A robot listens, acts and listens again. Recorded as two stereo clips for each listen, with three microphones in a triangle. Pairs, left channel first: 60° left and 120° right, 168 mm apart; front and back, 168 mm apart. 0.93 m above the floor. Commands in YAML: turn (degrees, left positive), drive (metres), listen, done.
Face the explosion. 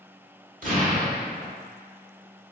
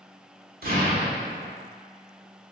turn: -160
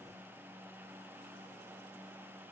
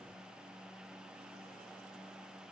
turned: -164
done: "I heard an explosion from this way, but can't make it out now."